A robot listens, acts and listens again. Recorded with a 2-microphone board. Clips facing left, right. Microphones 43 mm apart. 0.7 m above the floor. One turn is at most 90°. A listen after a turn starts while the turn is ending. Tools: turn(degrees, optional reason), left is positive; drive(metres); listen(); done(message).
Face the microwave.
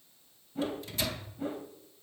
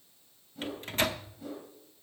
turn(degrees=-45, reason="The microwave: about 45° right or 135° right.")
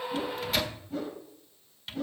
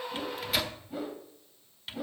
done("Facing the microwave.")